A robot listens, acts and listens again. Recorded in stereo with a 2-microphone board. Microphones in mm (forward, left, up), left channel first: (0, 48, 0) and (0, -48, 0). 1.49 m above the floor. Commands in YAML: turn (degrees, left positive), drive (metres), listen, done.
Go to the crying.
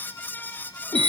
listen: true
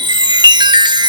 listen: true
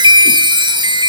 done: "I can't make out crying, only a chime."